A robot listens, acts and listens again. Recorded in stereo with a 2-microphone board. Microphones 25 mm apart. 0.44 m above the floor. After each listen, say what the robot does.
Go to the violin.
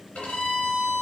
Turn 60° left.
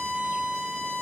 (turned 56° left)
Turn 50° left.
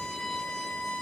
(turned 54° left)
Drive 1.0 m forward.
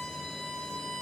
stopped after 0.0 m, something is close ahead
Something is in my way. I am facing the violin but have not reached it.